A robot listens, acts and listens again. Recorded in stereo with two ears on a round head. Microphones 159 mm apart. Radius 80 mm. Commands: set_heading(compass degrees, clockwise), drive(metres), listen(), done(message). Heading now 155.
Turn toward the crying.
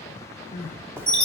set_heading(105)
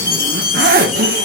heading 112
listen()
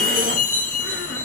listen()
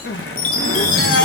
set_heading(32)
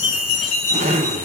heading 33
listen()
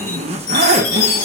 listen()
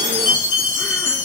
done("I heard crying from this way, but can't make it out now.")